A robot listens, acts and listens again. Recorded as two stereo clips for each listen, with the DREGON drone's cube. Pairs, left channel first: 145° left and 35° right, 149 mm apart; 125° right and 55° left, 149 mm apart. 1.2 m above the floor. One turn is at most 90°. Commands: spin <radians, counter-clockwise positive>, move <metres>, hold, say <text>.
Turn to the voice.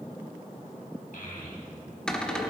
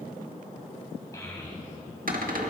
spin 1.57
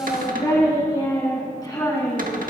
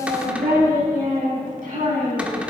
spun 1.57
spin 1.40
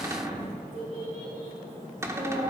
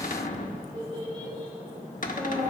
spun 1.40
say Found it: a child speaking, straight ahead.